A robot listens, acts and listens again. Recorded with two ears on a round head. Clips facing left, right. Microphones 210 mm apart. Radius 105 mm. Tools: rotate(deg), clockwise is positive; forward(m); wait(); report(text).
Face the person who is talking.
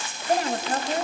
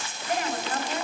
rotate(-35)
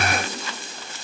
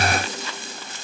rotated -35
wait()
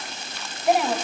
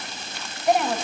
report("Found it: a woman speaking, straight ahead, 1 to 2 m away.")